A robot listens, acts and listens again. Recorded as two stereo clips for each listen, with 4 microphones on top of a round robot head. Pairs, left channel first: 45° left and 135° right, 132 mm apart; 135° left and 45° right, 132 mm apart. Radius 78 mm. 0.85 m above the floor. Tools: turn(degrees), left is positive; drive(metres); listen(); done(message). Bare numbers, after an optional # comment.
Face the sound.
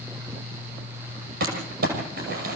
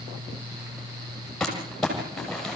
# The crumpling: 140° right.
turn(-140)
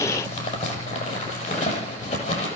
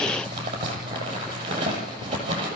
# The crumpling is now 10° left.
turn(10)
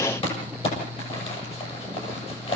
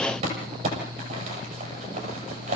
done("Facing the crumpling.")